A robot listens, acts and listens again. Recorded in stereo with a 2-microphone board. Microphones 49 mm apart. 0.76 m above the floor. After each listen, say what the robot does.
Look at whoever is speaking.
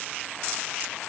Keep listening.
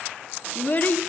Turn 35° left.
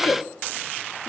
Turn 100° left.
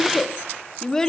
Turn 15° left.
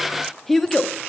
Found it: a child speaking, straight ahead.